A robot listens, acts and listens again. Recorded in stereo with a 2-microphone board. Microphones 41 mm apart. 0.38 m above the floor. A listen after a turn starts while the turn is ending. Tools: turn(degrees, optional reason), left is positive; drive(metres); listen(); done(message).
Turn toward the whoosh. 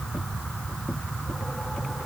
listen()
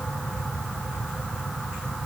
listen()
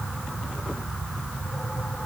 done("I can't make out a whoosh to turn to.")